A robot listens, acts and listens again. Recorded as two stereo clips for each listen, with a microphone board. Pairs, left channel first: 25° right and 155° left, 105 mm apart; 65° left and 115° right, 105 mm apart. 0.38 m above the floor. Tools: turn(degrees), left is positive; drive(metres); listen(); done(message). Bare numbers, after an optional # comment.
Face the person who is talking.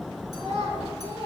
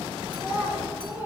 # The child speaking: straight behind.
turn(180)
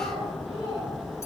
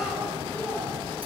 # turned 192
done("Facing the child speaking.")